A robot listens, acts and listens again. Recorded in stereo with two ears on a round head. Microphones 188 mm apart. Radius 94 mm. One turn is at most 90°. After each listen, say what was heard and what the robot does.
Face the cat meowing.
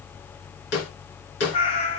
The cat meowing: about 30° left or 150° left. Turn 30° left.
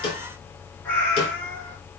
So it is at 10° left. Turn 10° left.
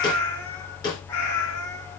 The cat meowing is now 15° left. Turn 15° left.
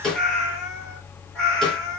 Found it: a cat meowing, straight ahead.